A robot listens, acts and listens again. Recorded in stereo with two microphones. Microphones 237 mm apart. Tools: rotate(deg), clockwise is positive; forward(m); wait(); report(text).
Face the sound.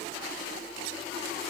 wait()
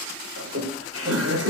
rotate(75)
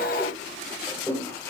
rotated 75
rotate(-10)
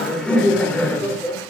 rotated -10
rotate(-10)
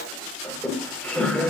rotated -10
report("Facing the laughter, over 4 m away.")